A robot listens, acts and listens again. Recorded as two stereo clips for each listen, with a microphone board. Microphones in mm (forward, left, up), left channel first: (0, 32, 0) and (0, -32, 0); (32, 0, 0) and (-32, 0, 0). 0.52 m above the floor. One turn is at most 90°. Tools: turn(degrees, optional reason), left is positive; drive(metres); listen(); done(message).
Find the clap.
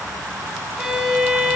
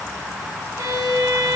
listen()
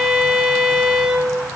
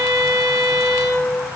listen()
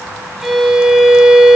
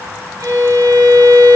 done("I can't make out a clap to turn to.")